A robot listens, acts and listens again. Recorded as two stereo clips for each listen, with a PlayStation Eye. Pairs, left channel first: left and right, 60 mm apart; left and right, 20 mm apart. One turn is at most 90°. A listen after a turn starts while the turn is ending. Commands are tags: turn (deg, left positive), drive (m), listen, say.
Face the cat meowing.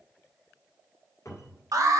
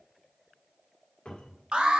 <listen/>
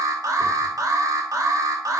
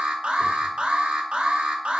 <listen/>
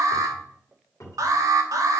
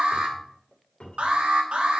<say>I can't make out a cat meowing, only an alarm and a cupboard door.</say>